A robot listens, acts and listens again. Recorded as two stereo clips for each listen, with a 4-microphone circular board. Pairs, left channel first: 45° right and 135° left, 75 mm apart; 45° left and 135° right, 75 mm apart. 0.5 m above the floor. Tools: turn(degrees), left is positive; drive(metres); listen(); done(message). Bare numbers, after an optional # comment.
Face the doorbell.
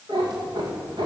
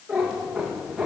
listen()
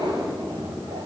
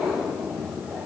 listen()
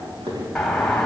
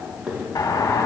# The doorbell: 40° left.
turn(40)
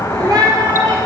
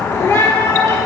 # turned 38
done("Found it: a doorbell, straight ahead, 2 to 4 m away.")